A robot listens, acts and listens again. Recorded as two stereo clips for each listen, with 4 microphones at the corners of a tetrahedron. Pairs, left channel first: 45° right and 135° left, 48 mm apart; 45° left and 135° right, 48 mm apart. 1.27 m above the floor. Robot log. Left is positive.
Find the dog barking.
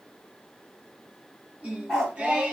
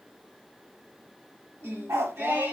note: The dog barking: 130° right.
cmd yaw -130
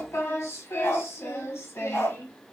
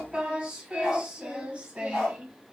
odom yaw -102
note: The dog barking is now 35° right.
cmd yaw -35
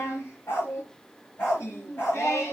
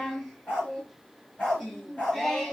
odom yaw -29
end: Facing the dog barking, over 4 m away.